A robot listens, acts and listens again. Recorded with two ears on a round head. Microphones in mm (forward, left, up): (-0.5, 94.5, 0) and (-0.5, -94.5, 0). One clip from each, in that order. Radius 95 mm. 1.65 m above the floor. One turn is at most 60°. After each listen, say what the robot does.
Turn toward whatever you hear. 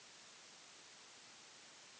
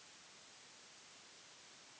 Keep listening.
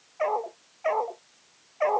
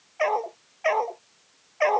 Turn 60° right.
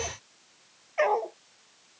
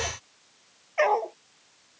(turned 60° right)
Turn 20° right.
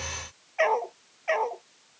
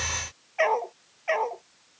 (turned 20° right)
Facing the dog barking.